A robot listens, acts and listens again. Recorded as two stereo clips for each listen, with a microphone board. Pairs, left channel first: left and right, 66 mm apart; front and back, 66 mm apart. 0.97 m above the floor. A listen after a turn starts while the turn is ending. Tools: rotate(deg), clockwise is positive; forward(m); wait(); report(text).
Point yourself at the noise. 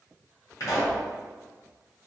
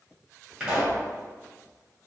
rotate(-105)
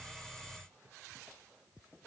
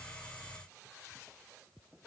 report("Facing where the pop came from. I can't hear it now.")